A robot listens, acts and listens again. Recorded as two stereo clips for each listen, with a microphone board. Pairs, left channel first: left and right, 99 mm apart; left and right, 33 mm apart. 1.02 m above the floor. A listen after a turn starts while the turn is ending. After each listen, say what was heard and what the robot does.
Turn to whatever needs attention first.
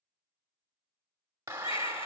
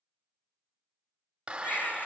The baby crying: about 65° left or 115° left. Turn 65° left.
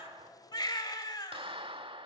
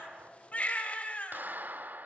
So it is at 50° left. Turn 50° left.
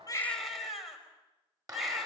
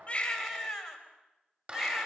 Found it: a baby crying, straight ahead, over 4 m away.